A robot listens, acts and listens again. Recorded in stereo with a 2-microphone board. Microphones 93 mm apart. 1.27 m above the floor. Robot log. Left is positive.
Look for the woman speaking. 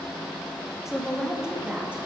cmd yaw -30
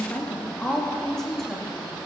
end: Facing the woman speaking, 2 to 4 m away.